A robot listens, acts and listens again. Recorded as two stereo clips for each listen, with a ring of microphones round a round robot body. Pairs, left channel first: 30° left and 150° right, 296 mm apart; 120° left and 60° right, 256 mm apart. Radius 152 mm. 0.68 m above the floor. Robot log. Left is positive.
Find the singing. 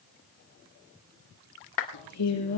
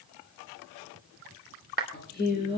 note: The singing: 70° left.
cmd yaw +70
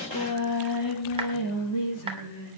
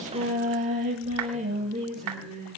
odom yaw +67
end: Found it: singing, straight ahead.